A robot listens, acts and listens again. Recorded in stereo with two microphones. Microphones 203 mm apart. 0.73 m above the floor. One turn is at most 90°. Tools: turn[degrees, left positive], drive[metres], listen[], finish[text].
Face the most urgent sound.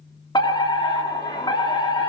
Thought: The fire alarm: about 20° left or 160° left.
Action: turn[20]
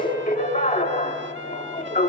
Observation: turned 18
Thought: So it is at 145° left.
Action: turn[90]
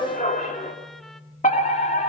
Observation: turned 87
Thought: The fire alarm is now 45° left.
Action: turn[45]
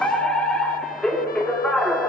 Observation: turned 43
Action: finish[Facing the fire alarm, 2 to 4 m away.]